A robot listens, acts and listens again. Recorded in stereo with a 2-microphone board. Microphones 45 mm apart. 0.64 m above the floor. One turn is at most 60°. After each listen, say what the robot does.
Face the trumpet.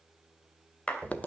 Keep listening.
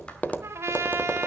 Turn 60° right.
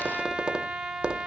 Turn 15° right.
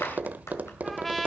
Facing the trumpet.